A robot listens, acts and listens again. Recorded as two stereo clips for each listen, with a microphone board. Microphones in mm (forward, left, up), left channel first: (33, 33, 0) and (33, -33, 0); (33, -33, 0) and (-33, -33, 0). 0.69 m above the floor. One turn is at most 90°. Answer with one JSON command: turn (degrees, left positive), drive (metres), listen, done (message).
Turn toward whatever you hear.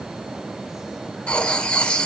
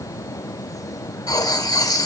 {"turn": 15}
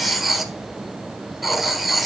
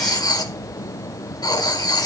{"done": "Facing the writing."}